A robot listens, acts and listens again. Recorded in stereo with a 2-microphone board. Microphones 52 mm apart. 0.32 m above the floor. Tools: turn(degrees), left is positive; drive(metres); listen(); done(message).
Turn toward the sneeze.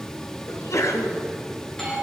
turn(degrees=70)
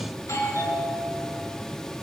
listen()
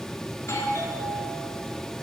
done("I heard a sneeze, but can't make it out now. It was about straight ahead or 40° left.")